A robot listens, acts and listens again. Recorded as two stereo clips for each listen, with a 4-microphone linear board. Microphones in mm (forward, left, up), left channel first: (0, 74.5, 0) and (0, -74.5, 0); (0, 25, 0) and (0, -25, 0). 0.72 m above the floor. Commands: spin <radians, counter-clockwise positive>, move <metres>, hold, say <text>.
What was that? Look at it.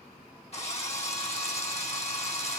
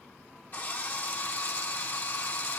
spin 0.79
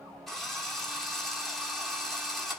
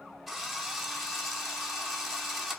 say Facing the drill, 1 to 2 m away.